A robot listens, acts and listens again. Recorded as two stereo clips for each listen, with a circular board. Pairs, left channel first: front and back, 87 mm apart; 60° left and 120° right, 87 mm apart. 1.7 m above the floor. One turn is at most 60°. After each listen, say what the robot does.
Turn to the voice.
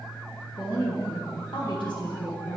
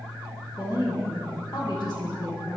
Turn 25° left.
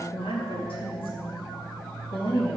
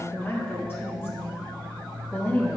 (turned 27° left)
Found it: a woman speaking, straight ahead.